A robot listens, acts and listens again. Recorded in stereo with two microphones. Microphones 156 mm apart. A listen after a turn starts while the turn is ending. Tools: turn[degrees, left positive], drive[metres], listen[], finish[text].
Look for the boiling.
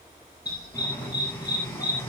Action: turn[30]
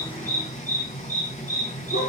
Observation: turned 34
Thought: So it is at 135° left.
Action: turn[135]
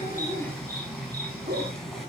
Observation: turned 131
Action: finish[Found it: boiling, straight ahead.]